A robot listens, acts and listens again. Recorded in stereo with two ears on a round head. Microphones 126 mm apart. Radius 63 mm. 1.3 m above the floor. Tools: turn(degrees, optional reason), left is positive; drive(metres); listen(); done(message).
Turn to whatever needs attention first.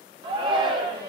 turn(degrees=-35, reason="The shout: about 35° right or 145° right.")
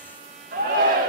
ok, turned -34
turn(degrees=-110, reason="So it is at 110° right.")
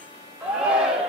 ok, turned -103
done("Facing the shout.")